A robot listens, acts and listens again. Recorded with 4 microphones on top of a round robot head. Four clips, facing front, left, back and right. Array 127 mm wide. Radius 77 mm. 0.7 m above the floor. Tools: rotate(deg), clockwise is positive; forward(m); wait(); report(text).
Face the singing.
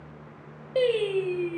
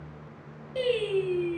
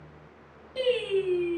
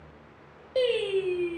rotate(10)
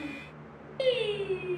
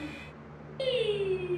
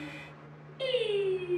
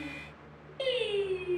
rotate(-15)
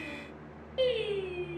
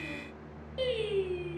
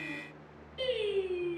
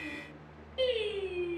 rotate(-15)
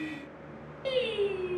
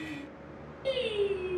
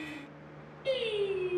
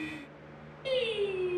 rotate(-15)
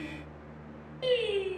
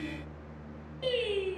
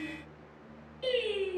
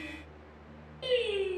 report("Found it: singing, straight ahead.")